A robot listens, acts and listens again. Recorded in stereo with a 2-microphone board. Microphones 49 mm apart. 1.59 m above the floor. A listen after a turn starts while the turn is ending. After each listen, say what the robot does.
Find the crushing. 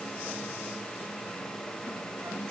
Keep listening.
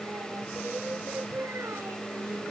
Keep listening.
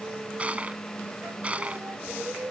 Turn 25° right.
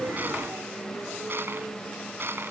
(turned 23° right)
Turn 130° right.
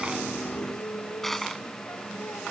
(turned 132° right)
Facing the crushing.